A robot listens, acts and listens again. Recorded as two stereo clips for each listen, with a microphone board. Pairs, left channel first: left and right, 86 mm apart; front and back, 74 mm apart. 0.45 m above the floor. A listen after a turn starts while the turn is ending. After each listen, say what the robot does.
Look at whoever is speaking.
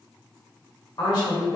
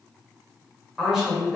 Turn 100° left.
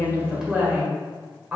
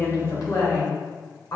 Turn 20° right.
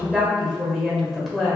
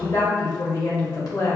Facing the woman speaking.